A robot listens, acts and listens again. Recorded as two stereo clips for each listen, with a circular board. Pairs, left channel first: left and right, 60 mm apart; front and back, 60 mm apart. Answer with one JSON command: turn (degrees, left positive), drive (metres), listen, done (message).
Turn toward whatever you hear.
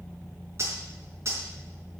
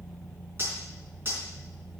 {"turn": -130}
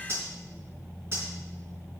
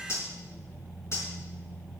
{"turn": -40}
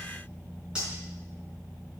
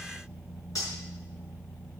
{"turn": -15}
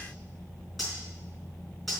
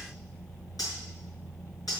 {"done": "Found it: cutlery clinking, straight ahead, over 4 m away."}